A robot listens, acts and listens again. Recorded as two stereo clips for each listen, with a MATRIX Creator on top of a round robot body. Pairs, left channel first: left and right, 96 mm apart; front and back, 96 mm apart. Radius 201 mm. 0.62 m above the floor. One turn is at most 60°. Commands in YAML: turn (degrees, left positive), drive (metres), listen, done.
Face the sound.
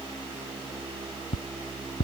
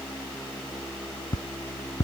turn: 60
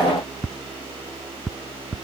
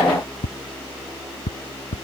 done: "Facing the ticking."